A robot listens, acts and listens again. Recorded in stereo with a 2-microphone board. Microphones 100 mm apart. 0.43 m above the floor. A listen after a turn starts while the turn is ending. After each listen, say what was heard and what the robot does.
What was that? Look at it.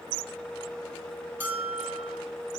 The bell: about 20° right or 160° right. Turn 20° right.
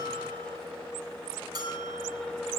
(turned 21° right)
So it is at 140° right. Turn 140° right.
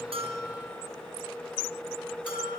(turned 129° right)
Nothing new. It was at 15° right. Turn 15° right.
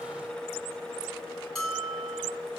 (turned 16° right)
Found it: a bell, straight ahead.